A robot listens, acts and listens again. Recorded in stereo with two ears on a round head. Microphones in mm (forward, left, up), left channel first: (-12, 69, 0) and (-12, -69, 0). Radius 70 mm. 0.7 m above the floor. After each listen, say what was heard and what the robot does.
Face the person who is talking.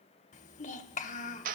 The child speaking: about 55° left or 125° left. Turn 55° left.
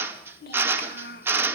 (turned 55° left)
So it is at 70° left. Turn 70° left.
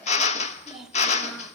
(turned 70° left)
Facing the child speaking, 2 to 4 m away.